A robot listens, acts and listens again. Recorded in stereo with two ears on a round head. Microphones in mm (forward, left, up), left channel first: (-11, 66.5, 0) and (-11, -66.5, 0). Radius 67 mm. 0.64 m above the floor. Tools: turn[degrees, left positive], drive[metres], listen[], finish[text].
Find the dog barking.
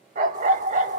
Thought: The dog barking: about 60° right or 120° right.
Action: turn[-60]
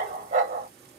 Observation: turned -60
Thought: So it is at 55° right.
Action: turn[-55]
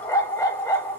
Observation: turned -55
Thought: The dog barking is now 20° left.
Action: turn[20]
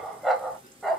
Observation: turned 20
Action: finish[Found it: a dog barking, straight ahead, under 1 m away.]